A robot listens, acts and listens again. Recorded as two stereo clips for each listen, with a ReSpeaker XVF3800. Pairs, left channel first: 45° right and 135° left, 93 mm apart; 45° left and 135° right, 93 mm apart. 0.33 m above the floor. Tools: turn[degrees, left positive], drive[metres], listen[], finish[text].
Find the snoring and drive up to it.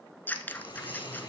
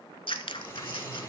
Thought: The snoring: 10° right.
Action: turn[-10]
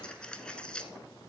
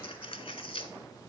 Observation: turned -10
Action: listen[]
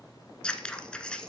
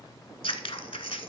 Action: listen[]
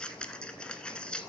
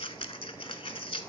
Action: finish[Facing where the snoring came from. I can't hear it now. I did not reach it.]